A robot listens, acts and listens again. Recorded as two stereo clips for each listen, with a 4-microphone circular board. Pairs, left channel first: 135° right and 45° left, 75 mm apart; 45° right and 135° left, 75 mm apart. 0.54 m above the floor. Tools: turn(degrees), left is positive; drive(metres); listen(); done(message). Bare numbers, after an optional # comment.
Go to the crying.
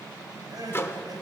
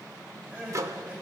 # The crying: 70° left.
turn(70)
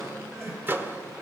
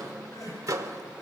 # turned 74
drive(1.0)
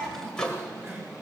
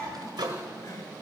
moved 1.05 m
drive(1.0)
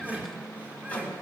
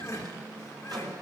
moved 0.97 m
# The crying is now 15° right.
turn(-15)
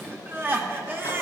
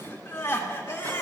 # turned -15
drive(1.0)
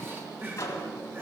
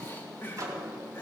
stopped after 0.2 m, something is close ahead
done("Arrived at the crying, straight ahead.")